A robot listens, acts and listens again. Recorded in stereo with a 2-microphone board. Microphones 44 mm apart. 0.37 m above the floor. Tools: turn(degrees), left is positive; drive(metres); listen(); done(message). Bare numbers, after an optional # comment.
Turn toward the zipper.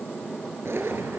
# The zipper: about 70° right or 110° right.
turn(-70)
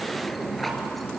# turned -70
done("Facing the zipper, 2 to 4 m away.")